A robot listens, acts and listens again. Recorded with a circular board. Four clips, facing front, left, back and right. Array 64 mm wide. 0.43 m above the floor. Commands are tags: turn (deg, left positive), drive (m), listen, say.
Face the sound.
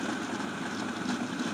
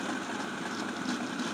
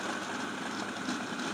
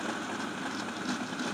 <listen/>
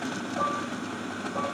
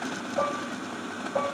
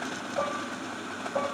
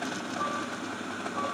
<turn deg="120"/>
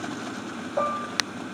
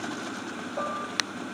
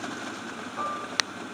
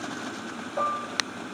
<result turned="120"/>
<turn deg="-15"/>
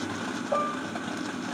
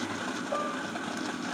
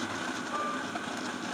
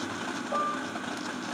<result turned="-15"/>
<say>Facing the dishes clattering.</say>